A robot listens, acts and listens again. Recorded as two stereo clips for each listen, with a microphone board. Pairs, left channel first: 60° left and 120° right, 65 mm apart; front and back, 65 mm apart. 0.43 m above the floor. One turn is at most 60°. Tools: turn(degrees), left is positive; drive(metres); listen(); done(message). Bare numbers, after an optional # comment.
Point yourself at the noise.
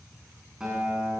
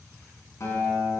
# The guitar: 40° right.
turn(-40)
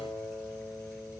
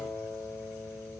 done("Facing the guitar.")